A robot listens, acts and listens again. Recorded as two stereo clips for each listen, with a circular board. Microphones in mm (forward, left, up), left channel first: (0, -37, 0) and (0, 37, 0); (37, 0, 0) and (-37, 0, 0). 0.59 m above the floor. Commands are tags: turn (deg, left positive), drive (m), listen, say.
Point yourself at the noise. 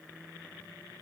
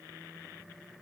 <listen/>
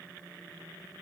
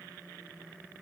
<listen/>
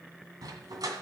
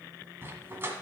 <turn deg="120"/>
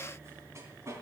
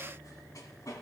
<turn deg="40"/>
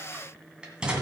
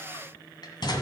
<turn deg="15"/>
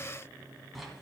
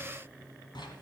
<say>Found it: a dog barking, straight ahead.</say>